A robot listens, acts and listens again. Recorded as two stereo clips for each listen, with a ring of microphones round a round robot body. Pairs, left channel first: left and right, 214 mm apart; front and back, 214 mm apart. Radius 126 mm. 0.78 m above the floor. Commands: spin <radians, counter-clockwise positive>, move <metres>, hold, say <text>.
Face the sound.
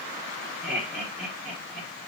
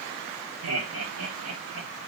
spin 3.05
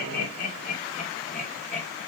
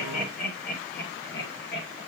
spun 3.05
spin 0.61
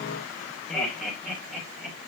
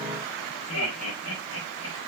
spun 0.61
say Found it: laughter, straight ahead, 2 to 4 m away.